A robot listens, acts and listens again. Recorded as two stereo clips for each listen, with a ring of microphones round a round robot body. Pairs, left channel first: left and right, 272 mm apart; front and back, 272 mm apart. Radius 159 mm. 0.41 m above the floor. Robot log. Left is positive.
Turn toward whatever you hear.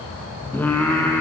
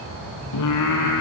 end: Facing the singing.